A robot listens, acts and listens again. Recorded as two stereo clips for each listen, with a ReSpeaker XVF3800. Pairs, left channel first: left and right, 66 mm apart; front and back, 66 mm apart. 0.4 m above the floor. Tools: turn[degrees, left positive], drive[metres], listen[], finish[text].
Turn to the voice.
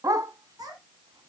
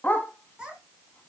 Thought: The child speaking: 105° right.
Action: turn[-105]
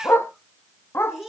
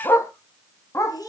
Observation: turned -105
Action: finish[Found it: a child speaking, straight ahead.]